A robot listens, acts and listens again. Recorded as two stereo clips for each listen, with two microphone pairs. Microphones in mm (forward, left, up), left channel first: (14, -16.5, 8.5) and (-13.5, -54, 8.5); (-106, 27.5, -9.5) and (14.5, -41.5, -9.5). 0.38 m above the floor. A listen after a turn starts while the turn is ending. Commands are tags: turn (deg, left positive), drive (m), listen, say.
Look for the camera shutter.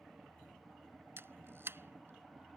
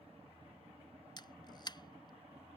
<turn deg="-155"/>
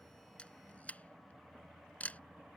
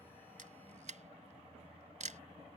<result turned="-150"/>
<say>Facing the camera shutter.</say>